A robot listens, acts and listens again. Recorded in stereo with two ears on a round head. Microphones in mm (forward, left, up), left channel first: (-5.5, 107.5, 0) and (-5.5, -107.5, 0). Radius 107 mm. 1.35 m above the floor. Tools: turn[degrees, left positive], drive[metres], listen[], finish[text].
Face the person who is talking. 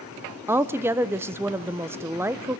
Action: turn[-30]
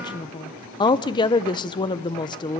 Thought: So it is at 20° left.
Action: turn[20]
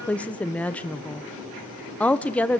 Action: finish[Found it: a woman speaking, straight ahead, under 1 m away.]